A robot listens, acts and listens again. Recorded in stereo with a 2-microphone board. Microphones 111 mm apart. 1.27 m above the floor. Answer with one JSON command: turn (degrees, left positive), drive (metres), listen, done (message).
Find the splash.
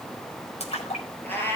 {"turn": 90}
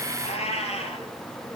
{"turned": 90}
{"done": "I heard a splash from this way, but can't make it out now."}